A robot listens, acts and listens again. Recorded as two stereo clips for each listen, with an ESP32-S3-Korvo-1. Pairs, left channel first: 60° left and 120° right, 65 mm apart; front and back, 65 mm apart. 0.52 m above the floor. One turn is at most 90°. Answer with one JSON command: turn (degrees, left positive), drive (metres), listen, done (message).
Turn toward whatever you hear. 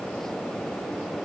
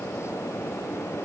{"listen": true}
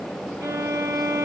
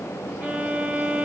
{"turn": -90}
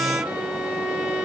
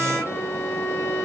{"turn": -55}
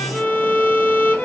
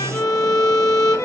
{"done": "Facing the violin, 1 to 2 m away."}